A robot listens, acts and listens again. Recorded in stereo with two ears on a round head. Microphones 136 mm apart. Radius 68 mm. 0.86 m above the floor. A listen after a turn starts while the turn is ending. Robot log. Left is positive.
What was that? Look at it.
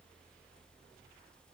cmd idle
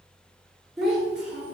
cmd yaw -30
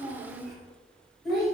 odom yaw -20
cmd yaw +30
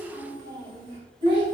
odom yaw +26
note: So it is at 35° right.
cmd yaw -35
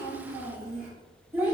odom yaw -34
end: Found it: a child speaking, straight ahead.